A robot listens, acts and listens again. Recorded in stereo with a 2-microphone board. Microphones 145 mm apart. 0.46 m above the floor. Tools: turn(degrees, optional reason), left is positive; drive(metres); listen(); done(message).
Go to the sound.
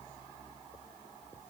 listen()
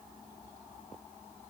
listen()
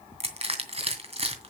turn(degrees=-45, reason="The crushing: about 45° right or 135° right.")
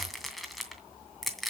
drive(metres=1.0)
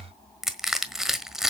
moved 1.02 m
drive(metres=1.0)
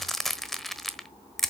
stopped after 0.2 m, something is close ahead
done("I am next to the crushing.")